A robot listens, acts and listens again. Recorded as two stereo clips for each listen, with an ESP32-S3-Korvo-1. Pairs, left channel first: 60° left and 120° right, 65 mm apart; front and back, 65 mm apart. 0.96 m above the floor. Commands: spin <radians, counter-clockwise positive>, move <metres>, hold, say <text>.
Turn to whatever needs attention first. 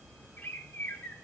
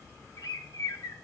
hold
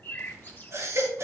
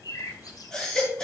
spin -1.40
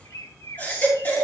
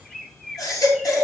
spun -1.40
say Facing the baby crying.